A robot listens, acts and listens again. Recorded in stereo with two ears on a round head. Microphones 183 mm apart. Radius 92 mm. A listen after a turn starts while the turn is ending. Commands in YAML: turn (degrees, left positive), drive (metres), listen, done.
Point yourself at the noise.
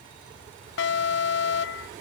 turn: 60
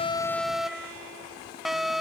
done: "Found it: an alarm, straight ahead."